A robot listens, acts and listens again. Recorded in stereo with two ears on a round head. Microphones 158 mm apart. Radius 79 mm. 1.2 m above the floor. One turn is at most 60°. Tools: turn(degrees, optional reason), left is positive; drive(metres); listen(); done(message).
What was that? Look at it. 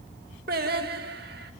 turn(degrees=-60, reason="The singing: about 60° right or 120° right.")
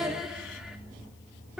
done("Facing the singing, 2 to 4 m away.")